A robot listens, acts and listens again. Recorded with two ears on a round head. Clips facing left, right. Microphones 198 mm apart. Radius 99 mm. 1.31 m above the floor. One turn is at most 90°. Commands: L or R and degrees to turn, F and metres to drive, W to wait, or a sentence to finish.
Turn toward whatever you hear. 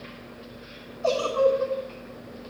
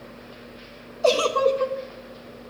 R75
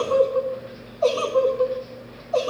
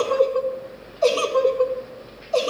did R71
R35
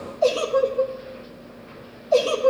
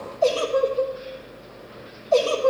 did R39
Found it: a giggle, straight ahead.